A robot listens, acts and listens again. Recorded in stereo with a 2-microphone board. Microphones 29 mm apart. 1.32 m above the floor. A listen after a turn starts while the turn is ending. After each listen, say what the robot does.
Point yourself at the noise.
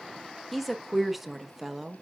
Turn 30° right.
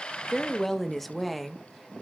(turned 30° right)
Turn 30° right.
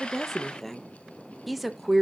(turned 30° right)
Turn 30° right.
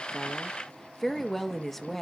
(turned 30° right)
Turn 10° left.
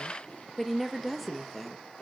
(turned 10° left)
Found it: a woman speaking, straight ahead.